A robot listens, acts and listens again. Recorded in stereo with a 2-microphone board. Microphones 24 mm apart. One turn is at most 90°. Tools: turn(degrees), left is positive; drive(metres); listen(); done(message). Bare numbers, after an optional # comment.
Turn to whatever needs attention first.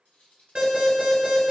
# The alarm: about 50° right or 130° right.
turn(-50)
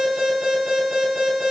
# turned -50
# So it is at 75° right.
turn(-75)
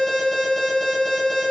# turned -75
done("Facing the alarm.")